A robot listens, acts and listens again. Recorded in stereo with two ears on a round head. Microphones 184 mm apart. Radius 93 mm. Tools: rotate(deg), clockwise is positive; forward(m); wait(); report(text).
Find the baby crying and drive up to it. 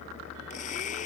wait()
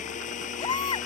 rotate(-20)
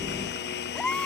forward(1.0)
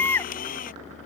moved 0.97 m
rotate(-10)
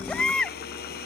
forward(1.0)
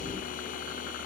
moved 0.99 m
wait()
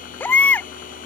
rotate(-10)
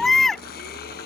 forward(1.0)
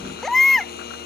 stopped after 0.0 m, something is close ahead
report("I am next to the baby crying.")